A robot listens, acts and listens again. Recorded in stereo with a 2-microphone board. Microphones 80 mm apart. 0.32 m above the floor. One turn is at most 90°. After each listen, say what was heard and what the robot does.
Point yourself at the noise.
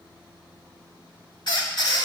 The squeak: about 60° left or 120° left. Turn 60° left.
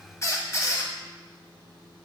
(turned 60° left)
So it is at 40° left. Turn 40° left.
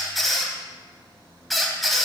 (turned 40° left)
Found it: a squeak, straight ahead, 1 to 2 m away.